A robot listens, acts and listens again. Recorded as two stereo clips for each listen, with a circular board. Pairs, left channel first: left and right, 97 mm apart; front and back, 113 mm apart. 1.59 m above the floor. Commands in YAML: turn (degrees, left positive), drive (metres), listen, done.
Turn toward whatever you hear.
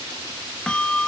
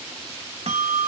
turn: 170
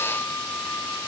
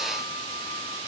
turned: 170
listen: true
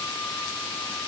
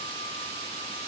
listen: true
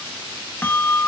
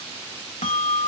turn: 20
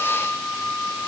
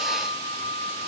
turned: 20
turn: 10
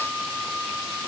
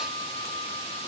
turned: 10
done: "Facing the bell."